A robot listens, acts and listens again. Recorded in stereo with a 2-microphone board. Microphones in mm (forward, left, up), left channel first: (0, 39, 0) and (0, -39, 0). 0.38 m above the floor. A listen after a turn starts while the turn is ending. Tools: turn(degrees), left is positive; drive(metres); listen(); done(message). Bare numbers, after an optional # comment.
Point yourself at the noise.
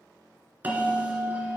# The bell: about 20° right or 160° right.
turn(-20)
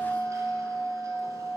# So it is at 140° right.
turn(-140)
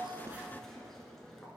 done("Found it: a bell, straight ahead, 1 to 2 m away.")